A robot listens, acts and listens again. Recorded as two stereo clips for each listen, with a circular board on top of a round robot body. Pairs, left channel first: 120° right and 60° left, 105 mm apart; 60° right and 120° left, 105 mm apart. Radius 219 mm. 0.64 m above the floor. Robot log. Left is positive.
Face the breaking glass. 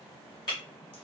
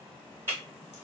note: The breaking glass: 170° right.
cmd yaw -170
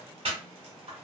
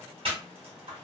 end: Facing where the breaking glass came from. I can't hear it now.